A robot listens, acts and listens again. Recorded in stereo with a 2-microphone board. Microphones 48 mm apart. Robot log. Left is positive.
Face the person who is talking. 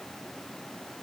cmd idle
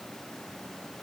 cmd idle
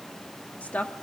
note: The woman speaking: about 35° left or 145° left.
cmd yaw +35
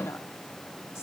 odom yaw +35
cmd idle
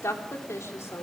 note: So it is at 100° left.
cmd yaw +100
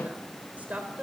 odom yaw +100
note: The woman speaking is now 35° right.
cmd yaw -35
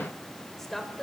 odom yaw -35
end: Facing the woman speaking.